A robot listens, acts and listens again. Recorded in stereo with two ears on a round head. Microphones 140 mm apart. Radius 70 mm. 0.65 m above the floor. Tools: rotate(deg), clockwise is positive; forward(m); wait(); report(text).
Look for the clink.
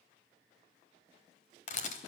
wait()
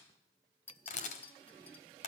rotate(-30)
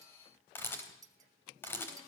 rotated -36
rotate(25)
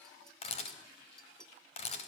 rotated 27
report("Facing the clink, 2 to 4 m away.")